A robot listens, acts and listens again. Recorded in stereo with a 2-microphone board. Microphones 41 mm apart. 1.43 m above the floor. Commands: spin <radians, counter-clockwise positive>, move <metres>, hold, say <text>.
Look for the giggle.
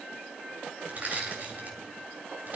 hold
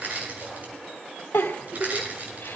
spin 1.57
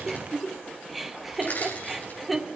say Facing the giggle, 2 to 4 m away.